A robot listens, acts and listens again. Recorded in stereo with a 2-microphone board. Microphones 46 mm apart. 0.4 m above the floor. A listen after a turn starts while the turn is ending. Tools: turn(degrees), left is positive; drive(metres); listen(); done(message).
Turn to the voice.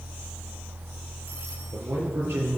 turn(degrees=-65)
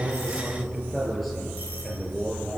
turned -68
done("Found it: a man speaking, straight ahead.")